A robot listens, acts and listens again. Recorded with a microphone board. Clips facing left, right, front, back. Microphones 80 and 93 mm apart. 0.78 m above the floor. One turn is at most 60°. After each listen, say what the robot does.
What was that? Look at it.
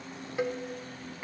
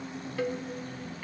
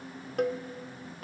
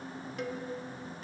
Turn 20° left.
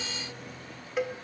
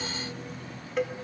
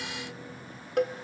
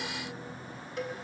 Found it: a cowbell, straight ahead, under 1 m away.